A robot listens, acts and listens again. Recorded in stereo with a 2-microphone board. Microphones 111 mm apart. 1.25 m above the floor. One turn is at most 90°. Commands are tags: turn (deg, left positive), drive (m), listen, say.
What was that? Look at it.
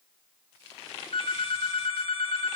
<turn deg="60"/>
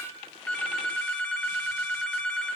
<turn deg="10"/>
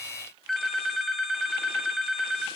<say>Found it: a phone ringing, straight ahead, 1 to 2 m away.</say>